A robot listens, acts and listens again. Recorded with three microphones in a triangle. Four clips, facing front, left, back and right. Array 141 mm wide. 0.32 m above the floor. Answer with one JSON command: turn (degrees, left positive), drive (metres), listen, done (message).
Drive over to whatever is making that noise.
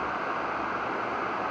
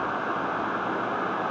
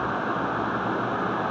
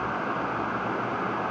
{"listen": true}
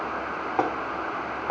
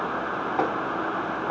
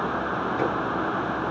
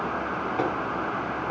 {"turn": 25}
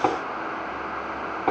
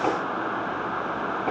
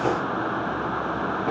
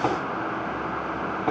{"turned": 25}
{"turn": -10}
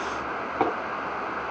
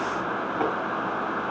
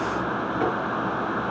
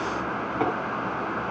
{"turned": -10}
{"drive": 1.0}
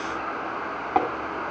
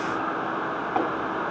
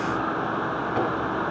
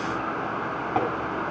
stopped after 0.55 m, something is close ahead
{"done": "Something is in my way. I am facing the tapping but have not reached it."}